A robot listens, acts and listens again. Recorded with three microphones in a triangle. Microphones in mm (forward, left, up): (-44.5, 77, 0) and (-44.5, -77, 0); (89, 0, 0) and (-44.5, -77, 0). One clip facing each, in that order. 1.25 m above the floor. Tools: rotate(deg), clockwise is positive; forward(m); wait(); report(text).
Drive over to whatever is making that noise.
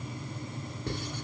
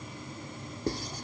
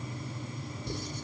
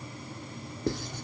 rotate(145)
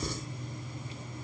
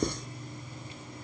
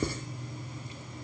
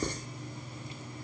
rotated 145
rotate(55)
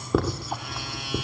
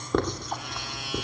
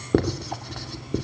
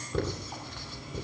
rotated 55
forward(1.0)
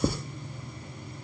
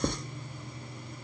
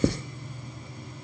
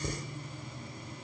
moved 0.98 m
forward(1.0)
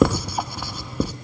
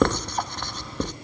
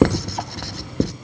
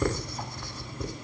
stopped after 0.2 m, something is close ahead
rotate(-10)
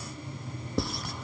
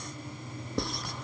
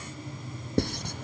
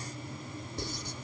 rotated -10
report("I am next to the writing.")